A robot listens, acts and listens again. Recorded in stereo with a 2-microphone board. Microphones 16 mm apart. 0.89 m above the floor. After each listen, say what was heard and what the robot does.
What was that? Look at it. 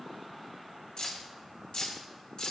Turn 90° left.
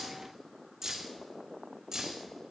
So it is at 35° right. Turn 35° right.
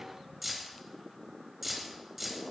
The keys jangling is now 10° right. Turn 10° right.
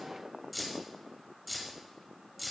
Found it: keys jangling, straight ahead, 2 to 4 m away.